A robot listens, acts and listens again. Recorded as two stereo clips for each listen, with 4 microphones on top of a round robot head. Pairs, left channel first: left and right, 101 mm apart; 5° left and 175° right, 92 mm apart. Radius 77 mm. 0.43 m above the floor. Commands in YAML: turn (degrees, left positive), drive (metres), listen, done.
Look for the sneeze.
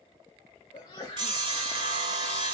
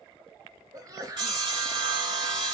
turn: 150
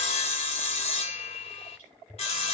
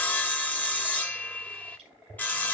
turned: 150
done: "Facing where the sneeze came from. I can't hear it now."